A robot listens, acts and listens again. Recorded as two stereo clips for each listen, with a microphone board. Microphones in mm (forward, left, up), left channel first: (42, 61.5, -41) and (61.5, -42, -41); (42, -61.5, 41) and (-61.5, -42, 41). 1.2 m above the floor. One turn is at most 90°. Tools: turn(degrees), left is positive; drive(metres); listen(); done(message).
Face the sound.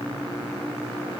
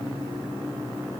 listen()
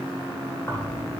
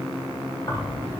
turn(degrees=40)
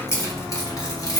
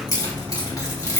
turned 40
turn(degrees=50)
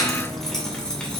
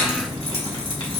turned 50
turn(degrees=20)
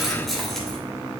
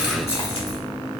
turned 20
turn(degrees=15)
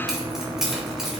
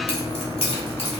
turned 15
done("Facing the keys jangling.")